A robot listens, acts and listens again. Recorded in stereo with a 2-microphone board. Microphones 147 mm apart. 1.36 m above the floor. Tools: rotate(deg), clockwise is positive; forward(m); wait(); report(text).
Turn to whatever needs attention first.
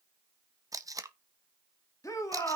rotate(-25)
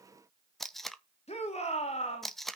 rotate(-130)
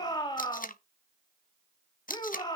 rotate(-30)
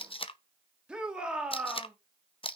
report("Found it: a shout, straight ahead, 2 to 4 m away.")